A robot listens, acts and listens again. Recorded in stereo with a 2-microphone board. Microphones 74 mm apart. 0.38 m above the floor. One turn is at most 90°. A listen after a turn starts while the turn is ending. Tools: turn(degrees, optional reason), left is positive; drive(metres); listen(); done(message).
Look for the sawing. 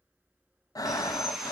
turn(degrees=-30)
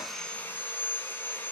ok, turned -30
turn(degrees=30, reason="So it is at 30° left.")
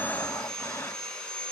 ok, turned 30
turn(degrees=15, reason="The sawing is now 15° left.")
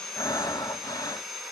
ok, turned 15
done("Facing the sawing, 2 to 4 m away.")